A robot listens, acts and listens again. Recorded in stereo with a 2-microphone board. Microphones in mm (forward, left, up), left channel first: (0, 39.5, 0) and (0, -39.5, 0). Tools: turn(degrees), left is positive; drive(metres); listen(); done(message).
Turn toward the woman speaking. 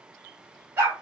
listen()
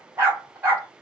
listen()
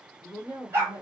turn(degrees=35)
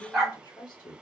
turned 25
turn(degrees=115)
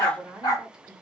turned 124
done("Found it: a woman speaking, straight ahead.")